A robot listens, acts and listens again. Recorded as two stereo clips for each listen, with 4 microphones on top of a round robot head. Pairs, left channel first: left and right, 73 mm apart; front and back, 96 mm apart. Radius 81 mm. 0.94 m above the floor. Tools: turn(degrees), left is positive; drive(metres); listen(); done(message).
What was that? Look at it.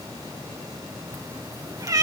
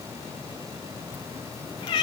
turn(degrees=-55)
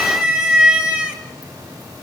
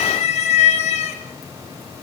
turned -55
turn(degrees=-20)
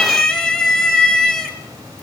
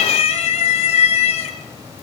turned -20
done("Facing the cat meowing.")